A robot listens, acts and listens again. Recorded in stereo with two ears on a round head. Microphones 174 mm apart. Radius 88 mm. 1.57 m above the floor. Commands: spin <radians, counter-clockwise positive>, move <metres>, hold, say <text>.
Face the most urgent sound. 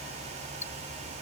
hold
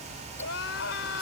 spin 1.13
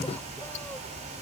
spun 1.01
hold
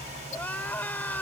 spin 0.17
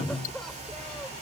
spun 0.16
say Found it: crying, straight ahead.